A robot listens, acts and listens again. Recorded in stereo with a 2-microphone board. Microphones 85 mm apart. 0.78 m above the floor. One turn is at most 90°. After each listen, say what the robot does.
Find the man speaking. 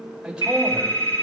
Turn 30° right.
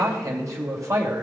Turn 90° right.
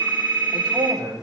Turn 50° right.
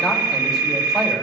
Keep listening.
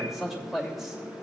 Facing the man speaking.